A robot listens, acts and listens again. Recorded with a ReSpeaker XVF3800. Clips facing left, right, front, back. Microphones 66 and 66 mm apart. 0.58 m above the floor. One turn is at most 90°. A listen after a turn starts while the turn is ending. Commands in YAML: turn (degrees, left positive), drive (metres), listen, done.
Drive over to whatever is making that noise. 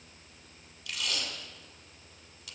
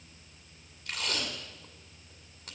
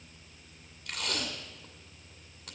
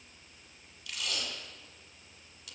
turn: -40
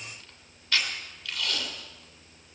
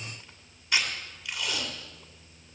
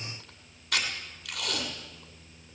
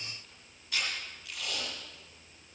turn: -15
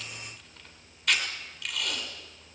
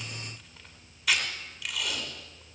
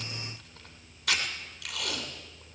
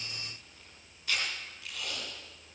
drive: 1.0
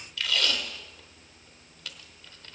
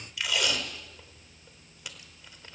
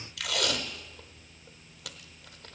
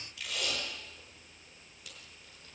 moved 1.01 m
turn: -15
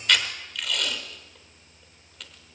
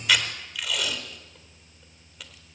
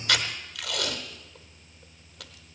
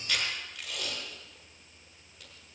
drive: 1.0
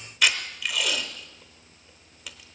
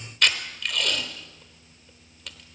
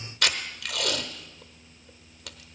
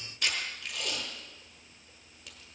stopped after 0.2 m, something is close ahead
done: "I am next to the tape being pulled."